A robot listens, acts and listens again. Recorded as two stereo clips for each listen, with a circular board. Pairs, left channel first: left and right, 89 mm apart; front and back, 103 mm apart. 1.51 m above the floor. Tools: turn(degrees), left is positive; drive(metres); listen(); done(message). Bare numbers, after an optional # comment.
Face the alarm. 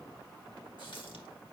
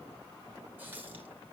listen()
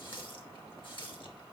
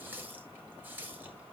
listen()
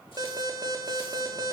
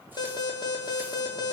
# The alarm: 45° right.
turn(-45)
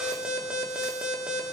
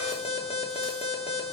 # The alarm is now 10° right.
turn(-10)
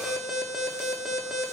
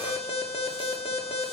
done("Facing the alarm.")